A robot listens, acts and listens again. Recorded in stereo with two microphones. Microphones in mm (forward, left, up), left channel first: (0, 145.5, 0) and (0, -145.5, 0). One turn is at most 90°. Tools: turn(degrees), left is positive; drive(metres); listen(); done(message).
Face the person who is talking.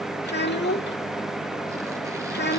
turn(degrees=35)
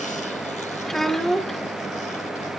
done("Facing the child speaking.")